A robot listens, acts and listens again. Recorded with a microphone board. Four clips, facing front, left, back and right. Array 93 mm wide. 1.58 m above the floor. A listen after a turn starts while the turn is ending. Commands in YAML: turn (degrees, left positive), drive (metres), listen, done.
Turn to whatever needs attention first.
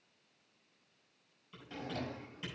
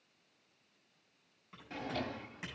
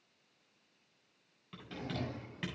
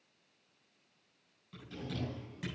listen: true
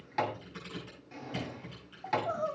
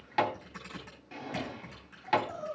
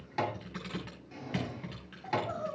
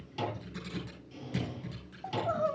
turn: -75
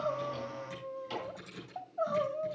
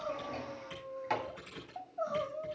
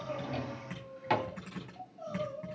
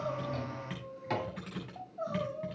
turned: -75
turn: 10
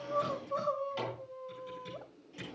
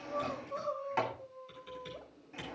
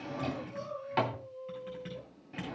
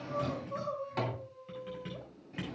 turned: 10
done: "Found it: crying, straight ahead."